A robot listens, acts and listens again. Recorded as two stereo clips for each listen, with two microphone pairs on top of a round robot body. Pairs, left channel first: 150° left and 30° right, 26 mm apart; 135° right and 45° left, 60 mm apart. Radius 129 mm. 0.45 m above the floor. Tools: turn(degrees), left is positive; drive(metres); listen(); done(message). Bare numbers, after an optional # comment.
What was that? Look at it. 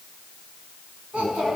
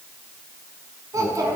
# The child speaking: 15° left.
turn(15)
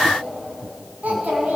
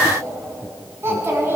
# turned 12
# The child speaking is now 10° right.
turn(-10)
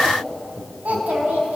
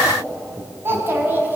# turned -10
# The child speaking is now 10° right.
turn(-10)
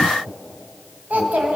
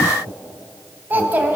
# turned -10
# The child speaking is now 20° right.
turn(-20)
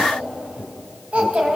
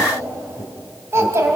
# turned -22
done("Found it: a child speaking, straight ahead.")